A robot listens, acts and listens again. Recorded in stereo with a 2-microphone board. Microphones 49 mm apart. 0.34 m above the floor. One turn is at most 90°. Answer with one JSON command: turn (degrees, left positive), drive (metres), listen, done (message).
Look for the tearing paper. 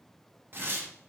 {"turn": -40}
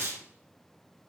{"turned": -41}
{"turn": -90}
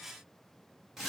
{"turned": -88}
{"done": "Found it: tearing paper, straight ahead."}